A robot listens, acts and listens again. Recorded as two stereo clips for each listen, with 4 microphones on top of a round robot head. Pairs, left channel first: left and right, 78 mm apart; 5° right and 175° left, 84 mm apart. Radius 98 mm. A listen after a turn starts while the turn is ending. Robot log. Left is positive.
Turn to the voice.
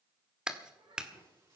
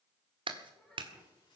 note: The child speaking: 90° right.
cmd yaw -90
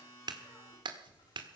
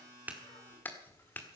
cmd idle
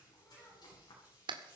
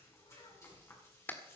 cmd idle
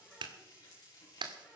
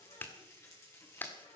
end: Facing where the child speaking came from. I can't hear it now.